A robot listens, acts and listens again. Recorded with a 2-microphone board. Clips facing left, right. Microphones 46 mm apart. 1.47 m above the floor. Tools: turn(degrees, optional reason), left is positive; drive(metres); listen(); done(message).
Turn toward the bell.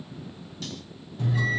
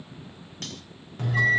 turn(degrees=-60, reason="The bell: about 60° right or 120° right.")
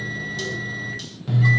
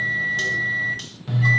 done("Found it: a bell, straight ahead, 1 to 2 m away.")